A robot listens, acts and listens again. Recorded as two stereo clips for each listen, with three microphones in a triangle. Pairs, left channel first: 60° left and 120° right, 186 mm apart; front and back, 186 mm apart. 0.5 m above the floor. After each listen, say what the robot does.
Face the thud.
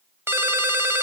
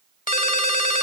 Keep listening.
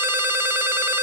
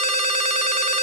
Keep listening.
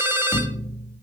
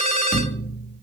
Found it: a thud, straight ahead.